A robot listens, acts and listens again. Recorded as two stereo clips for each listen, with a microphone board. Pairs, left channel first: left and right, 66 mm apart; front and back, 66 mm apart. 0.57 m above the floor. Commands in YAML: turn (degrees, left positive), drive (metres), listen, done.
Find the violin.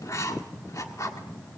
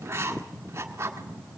listen: true
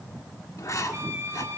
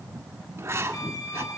turn: -30
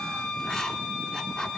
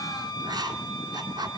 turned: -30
turn: 10
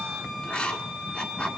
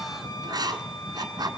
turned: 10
done: "Facing the violin, 2 to 4 m away."